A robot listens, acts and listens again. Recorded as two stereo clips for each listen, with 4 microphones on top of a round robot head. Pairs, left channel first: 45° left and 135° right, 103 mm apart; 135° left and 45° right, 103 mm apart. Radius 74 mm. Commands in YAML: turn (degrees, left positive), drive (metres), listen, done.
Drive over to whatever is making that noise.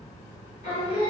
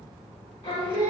turn: 90
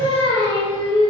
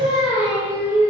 turn: 15
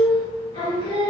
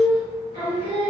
drive: 1.0
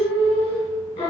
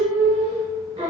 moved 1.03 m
turn: 10
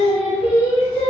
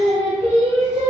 drive: 1.0
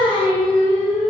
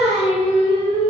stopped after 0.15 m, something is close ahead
done: "I am next to the singing."